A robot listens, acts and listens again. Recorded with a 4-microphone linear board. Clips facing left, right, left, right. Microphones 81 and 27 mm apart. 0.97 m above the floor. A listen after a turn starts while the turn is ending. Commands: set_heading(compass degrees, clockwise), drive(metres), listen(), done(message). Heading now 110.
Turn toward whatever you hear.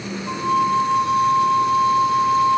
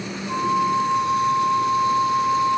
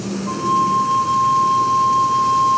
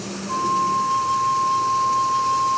set_heading(50)
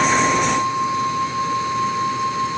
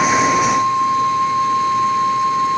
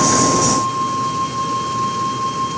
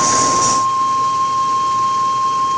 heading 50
done("Facing the flute, 2 to 4 m away.")